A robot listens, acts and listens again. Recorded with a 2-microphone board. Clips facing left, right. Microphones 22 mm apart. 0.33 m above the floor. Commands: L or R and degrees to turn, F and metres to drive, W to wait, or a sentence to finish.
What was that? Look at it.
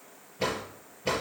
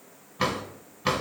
R75
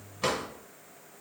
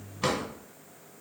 R15
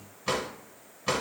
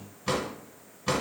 Facing the drawer, 1 to 2 m away.